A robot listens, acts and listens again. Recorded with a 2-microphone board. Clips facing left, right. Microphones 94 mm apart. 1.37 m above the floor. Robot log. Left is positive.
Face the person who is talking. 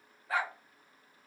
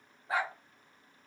cmd idle
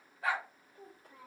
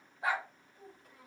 note: The child speaking: about 35° left or 145° left.
cmd yaw +35
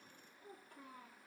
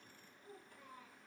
note: So it is at 120° left.
cmd yaw +120
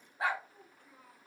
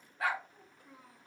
note: The child speaking is now 10° right.
cmd yaw -10
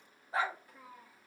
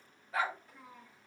note: The child speaking is now 10° left.
cmd yaw +10
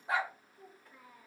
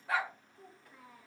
end: Facing the child speaking, 2 to 4 m away.